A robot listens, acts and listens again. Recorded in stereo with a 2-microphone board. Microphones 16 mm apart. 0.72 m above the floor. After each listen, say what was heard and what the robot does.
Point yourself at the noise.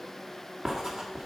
The writing: about 45° right or 135° right. Turn 45° right.
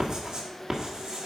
So it is at 75° right. Turn 75° right.
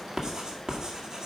The writing is now 50° right. Turn 50° right.
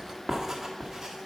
The writing is now 25° right. Turn 25° right.
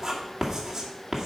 The writing is now 25° right. Turn 25° right.
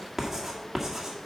Found it: writing, straight ahead, 1 to 2 m away.